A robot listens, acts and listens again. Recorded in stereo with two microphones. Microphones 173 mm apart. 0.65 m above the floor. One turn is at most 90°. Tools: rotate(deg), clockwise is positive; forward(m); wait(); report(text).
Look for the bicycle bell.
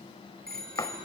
rotate(60)
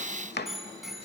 report("Facing the bicycle bell.")